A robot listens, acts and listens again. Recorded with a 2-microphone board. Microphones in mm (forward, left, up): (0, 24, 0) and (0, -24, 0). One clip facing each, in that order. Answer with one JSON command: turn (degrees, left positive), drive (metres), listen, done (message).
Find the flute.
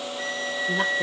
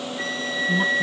{"turn": -45}
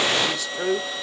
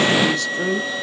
{"turn": -85}
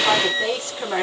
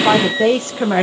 {"turn": -25}
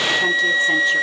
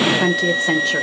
{"turn": 25}
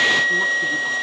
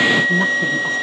{"turn": -10}
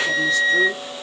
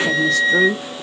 {"done": "Facing the flute, 1 to 2 m away."}